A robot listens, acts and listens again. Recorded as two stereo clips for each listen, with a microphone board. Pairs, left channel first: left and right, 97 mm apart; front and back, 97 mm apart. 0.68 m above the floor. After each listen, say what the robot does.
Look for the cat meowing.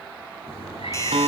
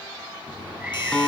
Turn 100° left.
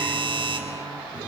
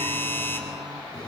Keep listening.
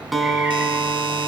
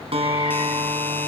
Turn 10° right.
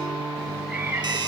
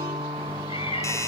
Turn 10° right.
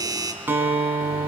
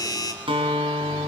Keep listening.
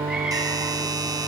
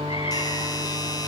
Keep listening.
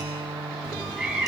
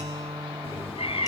Found it: a cat meowing, straight ahead, over 4 m away.